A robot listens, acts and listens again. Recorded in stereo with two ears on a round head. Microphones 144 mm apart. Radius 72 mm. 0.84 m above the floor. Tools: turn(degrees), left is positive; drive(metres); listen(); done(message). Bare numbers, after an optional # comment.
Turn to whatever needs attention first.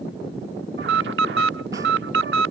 turn(-90)
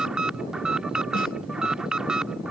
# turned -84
done("Found it: an alarm, straight ahead.")